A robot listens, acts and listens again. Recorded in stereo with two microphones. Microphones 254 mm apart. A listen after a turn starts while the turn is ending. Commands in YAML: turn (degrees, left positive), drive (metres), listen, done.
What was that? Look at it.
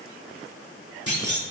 turn: -70
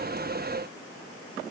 listen: true
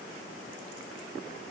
done: "I heard a clunk, but can't make it out now. It was about straight ahead or 40° right."